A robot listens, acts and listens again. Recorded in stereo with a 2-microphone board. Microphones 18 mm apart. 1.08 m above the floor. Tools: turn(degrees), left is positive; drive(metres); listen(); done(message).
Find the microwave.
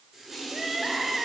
listen()
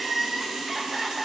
listen()
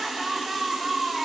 done("I can't make out a microwave to turn to.")